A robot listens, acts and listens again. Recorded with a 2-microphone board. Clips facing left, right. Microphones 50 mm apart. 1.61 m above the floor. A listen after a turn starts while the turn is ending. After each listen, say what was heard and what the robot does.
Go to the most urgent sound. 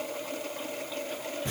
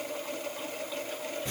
Keep listening.
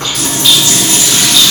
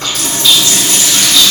Keep listening.
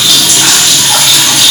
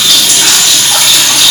I can't make out anything urgent to turn to.